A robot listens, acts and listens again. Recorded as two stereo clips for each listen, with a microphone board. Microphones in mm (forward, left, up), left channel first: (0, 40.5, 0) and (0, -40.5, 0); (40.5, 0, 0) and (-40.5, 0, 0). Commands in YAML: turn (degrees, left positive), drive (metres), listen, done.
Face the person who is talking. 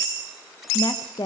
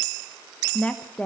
turn: 75
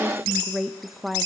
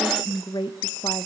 done: "Found it: a woman speaking, straight ahead."